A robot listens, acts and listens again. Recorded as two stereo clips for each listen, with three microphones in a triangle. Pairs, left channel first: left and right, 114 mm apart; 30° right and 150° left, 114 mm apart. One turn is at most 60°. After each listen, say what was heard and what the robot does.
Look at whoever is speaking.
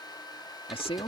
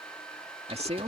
The man speaking: 125° left. Turn 60° left.
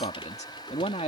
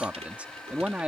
The man speaking is now 75° left. Turn 60° left.
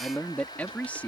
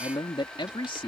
The man speaking is now 15° left. Turn 15° left.
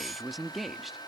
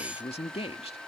Facing the man speaking.